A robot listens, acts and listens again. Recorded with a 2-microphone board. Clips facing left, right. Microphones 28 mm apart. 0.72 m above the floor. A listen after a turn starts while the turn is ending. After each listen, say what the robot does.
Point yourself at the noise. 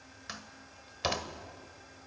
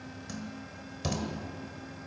Turn 40° left.
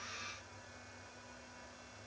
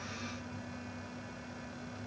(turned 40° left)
Keep listening.
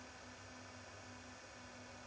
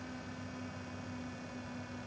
I heard a door slam, but can't make it out now. It was about straight ahead or 100° left.